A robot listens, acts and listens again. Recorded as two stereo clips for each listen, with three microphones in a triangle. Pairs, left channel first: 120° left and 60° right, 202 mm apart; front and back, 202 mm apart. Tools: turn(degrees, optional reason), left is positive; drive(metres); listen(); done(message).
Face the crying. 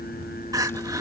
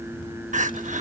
turn(degrees=-130, reason="The crying: 130° right.")
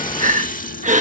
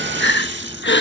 turn(degrees=-10, reason="The crying is now 10° right.")
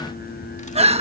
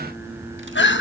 done("Facing the crying.")